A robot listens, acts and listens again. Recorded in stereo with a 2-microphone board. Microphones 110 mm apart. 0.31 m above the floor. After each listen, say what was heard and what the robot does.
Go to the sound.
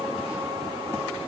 Keep listening.
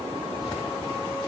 Keep listening.
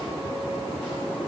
I can't make out anything.